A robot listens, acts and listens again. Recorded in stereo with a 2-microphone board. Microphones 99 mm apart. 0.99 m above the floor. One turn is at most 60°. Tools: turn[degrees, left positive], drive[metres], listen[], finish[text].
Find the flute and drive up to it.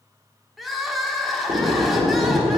Action: listen[]
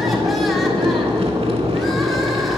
Action: listen[]
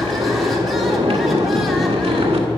Action: finish[I can't make out a flute to turn to.]